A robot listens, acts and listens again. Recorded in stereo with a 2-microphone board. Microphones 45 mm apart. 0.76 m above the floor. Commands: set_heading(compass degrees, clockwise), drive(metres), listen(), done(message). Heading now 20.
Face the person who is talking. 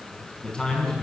set_heading(5)
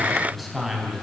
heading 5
set_heading(335)
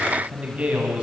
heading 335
set_heading(5)
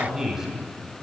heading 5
set_heading(15)
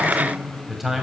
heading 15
done("Facing the man speaking.")